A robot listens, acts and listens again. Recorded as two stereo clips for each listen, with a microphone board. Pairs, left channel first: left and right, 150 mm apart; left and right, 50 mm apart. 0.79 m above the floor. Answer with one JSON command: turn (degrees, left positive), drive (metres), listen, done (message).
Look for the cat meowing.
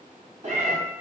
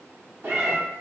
{"turn": -50}
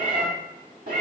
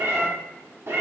{"turn": -80}
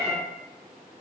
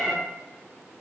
{"turn": 15}
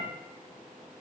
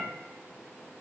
{"listen": true}
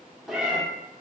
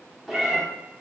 {"done": "Found it: a cat meowing, straight ahead."}